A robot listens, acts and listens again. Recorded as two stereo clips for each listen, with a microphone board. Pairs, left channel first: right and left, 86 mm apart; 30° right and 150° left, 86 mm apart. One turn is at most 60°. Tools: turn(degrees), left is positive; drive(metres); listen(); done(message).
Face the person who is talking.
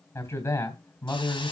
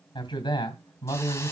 turn(degrees=-35)
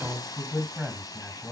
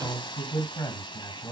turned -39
done("Facing the man speaking, 2 to 4 m away.")